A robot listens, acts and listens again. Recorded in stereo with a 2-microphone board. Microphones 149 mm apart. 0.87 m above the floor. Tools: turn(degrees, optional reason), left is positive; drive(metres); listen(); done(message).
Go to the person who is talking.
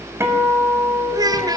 turn(degrees=-25, reason="The child speaking: about 25° right or 155° right.")
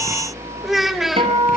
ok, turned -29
drive(metres=1.0)
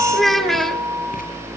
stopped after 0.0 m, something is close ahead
done("Blocked. The child speaking is further on, straight ahead.")